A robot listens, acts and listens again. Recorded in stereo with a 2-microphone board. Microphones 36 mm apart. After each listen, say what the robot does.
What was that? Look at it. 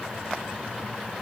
Keep listening.
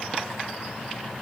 Keep listening.
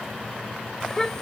Turn 15° left.
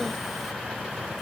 Keep listening.
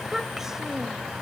Turn 10° right.
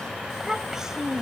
Turn 15° right.
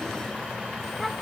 Keep listening.
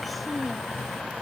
Keep listening.
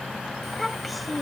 Found it: a child speaking, straight ahead.